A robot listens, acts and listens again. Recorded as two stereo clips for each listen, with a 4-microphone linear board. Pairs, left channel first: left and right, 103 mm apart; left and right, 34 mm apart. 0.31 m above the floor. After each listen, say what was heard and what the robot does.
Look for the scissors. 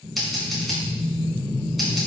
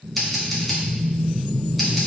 Turn 30° left.
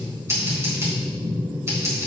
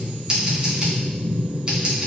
So it is at 30° right. Turn 30° right.
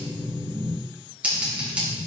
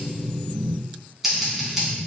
The scissors is now 15° right. Turn 15° right.
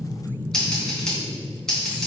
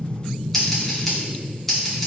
Found it: scissors, straight ahead, 2 to 4 m away.